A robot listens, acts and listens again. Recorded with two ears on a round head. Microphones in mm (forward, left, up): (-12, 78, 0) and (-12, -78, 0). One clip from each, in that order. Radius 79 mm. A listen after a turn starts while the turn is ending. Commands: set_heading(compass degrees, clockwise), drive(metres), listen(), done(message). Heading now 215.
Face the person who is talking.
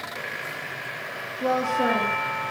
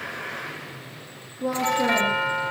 set_heading(160)
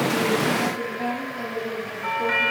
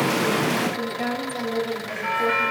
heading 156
set_heading(181)
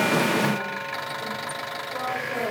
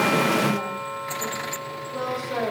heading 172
set_heading(192)
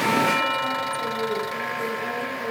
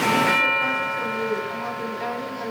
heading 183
set_heading(193)
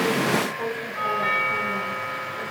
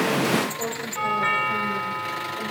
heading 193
done("Facing the woman speaking.")